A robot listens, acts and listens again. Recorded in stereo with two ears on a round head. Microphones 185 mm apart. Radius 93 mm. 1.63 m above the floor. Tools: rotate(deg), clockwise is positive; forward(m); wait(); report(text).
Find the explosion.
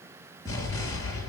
rotate(-15)
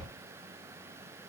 report("Found it: an explosion, straight ahead.")